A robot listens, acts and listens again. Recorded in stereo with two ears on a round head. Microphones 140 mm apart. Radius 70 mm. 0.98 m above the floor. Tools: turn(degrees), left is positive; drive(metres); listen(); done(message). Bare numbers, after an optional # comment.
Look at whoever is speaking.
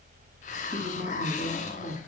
# The woman speaking: about 20° left or 160° left.
turn(20)
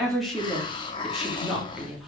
done("Found it: a woman speaking, straight ahead, 2 to 4 m away.")